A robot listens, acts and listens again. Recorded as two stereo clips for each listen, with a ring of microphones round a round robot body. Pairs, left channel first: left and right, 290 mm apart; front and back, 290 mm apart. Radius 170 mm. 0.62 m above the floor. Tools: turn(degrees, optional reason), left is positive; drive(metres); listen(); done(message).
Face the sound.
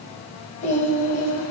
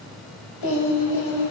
turn(degrees=30, reason="The singing: 30° left.")
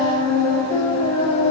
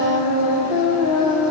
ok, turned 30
turn(degrees=20, reason="The singing is now 20° left.")
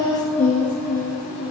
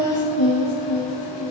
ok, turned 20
turn(degrees=15, reason="The singing is now 15° left.")
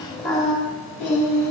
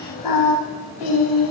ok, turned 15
turn(degrees=10, reason="The singing is now 10° left.")
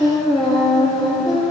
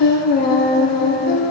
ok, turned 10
done("Facing the singing.")